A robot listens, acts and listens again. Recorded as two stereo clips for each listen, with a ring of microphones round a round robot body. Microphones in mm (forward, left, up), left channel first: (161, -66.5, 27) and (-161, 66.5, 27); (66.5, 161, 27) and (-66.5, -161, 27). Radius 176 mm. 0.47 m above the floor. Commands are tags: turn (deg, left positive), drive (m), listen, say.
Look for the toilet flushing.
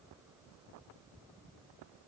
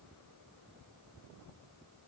<listen/>
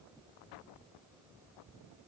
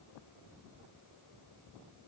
<listen/>
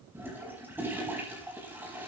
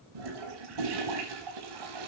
<turn deg="-120"/>
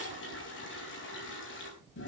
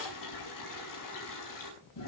<turn deg="35"/>
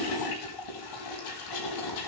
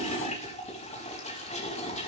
<say>Facing the toilet flushing, over 4 m away.</say>